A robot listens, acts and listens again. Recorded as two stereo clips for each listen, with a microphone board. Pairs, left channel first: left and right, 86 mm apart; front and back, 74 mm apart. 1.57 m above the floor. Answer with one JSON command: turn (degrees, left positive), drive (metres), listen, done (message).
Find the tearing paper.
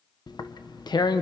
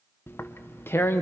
{"turn": 55}
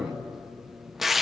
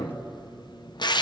{"done": "Found it: tearing paper, straight ahead."}